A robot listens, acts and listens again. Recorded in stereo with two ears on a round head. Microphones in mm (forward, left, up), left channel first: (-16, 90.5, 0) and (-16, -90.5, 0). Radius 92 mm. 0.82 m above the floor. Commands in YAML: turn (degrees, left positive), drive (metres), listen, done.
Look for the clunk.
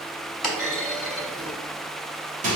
turn: 30
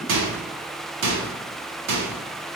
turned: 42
listen: true
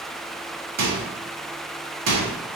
done: "I heard a clunk, but can't make it out now. It was about 40° right or 135° left."